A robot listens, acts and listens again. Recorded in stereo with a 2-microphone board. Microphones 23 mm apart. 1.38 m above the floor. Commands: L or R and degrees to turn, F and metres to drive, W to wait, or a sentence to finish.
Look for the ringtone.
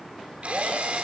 W
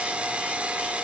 W
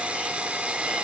I can't make out a ringtone, only a drill.